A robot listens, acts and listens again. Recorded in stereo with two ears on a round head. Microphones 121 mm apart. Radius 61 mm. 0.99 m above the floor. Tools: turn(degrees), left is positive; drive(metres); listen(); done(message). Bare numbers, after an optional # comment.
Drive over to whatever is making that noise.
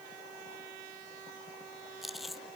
turn(30)
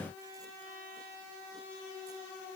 listen()
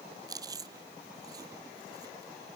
# So it is at 30° right.
turn(-30)
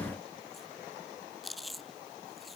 drive(1.0)
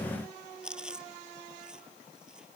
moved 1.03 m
drive(1.0)
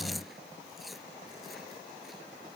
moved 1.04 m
drive(1.0)
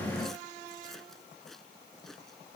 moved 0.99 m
listen()
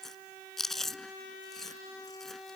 drive(1.0)
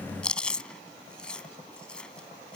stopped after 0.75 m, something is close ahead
# The chewing is now 10° left.
turn(10)
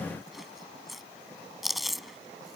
done("Arrived at the chewing, straight ahead.")